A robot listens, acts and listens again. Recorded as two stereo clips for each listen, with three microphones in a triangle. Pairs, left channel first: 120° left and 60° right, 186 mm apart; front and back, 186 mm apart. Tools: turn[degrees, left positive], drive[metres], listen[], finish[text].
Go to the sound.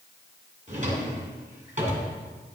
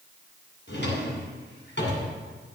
Thought: The drawer: 10° right.
Action: turn[-10]
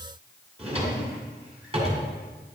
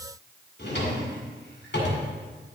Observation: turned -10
Action: drive[1.0]
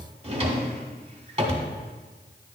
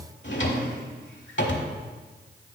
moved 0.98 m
Action: drive[1.0]
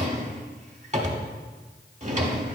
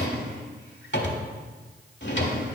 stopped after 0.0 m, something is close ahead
Thought: The drawer is now 10° right.
Action: turn[-10]
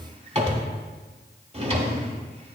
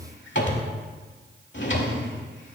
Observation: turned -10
Action: finish[Arrived at the drawer, straight ahead.]